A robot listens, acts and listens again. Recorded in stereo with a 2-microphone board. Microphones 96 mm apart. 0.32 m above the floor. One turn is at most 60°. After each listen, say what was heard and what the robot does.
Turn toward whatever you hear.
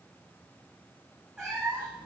Turn 30° right.
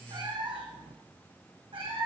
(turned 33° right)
So it is at 110° right. Turn 60° right.
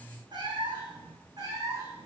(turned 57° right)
The cat meowing is now 35° right. Turn 35° right.
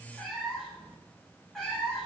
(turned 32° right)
Facing the cat meowing.